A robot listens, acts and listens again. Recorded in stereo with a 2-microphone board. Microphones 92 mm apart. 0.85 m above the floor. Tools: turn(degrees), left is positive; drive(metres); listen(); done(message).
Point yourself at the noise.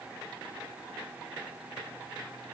listen()
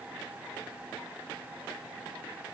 listen()
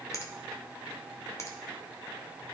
turn(degrees=30)
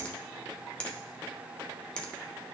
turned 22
turn(degrees=15)
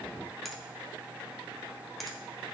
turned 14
done("Facing the finger snap.")